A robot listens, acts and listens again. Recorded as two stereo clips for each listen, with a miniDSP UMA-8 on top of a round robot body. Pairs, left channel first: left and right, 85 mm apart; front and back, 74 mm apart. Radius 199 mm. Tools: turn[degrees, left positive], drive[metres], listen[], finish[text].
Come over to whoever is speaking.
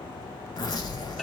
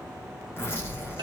Thought: The child speaking: 130° left.
Action: turn[130]
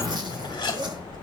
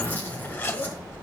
Thought: The child speaking is now 15° left.
Action: turn[15]
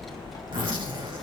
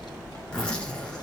Action: drive[1.0]
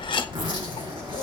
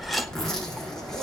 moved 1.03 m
Action: drive[1.0]
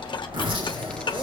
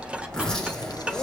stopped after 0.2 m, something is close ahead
Thought: The child speaking is now 10° left.
Action: turn[10]
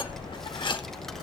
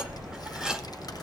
Action: finish[Arrived at the child speaking, straight ahead.]